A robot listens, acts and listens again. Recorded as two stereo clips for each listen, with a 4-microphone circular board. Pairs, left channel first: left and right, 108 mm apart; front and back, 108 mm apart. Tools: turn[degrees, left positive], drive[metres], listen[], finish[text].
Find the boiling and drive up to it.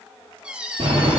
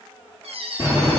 Thought: The boiling: 120° right.
Action: turn[-120]
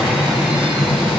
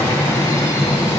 Thought: The boiling is now 10° right.
Action: turn[-10]
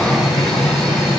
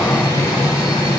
Action: drive[1.0]
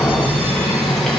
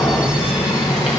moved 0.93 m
Action: drive[1.0]
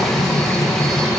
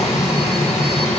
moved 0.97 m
Action: drive[1.0]
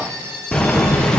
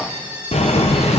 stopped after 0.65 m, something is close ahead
Action: finish[I am next to the boiling.]